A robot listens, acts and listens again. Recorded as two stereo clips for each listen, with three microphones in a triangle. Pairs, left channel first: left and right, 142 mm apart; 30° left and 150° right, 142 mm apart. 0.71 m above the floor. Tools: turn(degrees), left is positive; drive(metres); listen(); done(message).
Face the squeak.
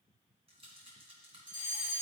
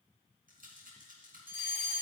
listen()
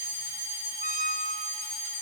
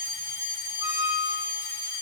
turn(degrees=-85)
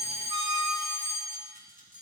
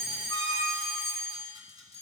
turn(degrees=-35)
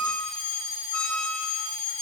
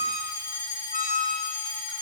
done("Found it: a squeak, straight ahead.")